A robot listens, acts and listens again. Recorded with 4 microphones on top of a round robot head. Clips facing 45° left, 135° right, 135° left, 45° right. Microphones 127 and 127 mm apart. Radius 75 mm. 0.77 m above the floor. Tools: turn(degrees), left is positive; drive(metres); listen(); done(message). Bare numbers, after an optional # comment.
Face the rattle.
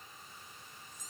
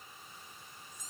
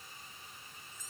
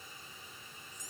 listen()
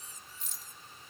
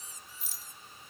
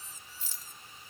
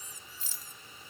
# The rattle: 45° right.
turn(-45)
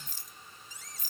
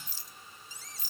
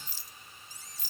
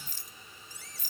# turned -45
done("Facing the rattle.")